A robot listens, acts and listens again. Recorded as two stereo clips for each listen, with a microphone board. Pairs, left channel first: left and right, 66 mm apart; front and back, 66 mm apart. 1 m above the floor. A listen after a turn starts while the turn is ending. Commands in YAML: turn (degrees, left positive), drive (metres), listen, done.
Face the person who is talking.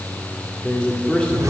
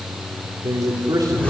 turn: 160
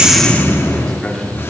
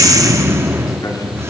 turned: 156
listen: true
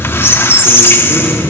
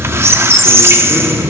listen: true
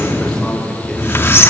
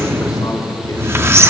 done: "Facing where the man speaking came from. I can't hear it now."